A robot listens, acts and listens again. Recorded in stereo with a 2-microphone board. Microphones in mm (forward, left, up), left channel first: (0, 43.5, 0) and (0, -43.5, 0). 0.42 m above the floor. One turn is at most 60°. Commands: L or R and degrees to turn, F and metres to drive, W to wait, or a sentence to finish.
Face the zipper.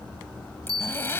L30
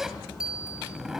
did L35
Facing the zipper, 1 to 2 m away.